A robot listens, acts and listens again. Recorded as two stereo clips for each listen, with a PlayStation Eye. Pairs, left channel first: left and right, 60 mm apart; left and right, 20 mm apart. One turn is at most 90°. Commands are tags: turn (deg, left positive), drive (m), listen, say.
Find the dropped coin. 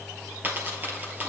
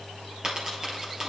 <turn deg="-35"/>
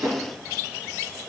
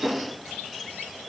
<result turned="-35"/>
<listen/>
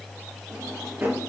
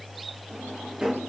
<say>I heard a dropped coin, but can't make it out now. It was about straight ahead or 110° right.</say>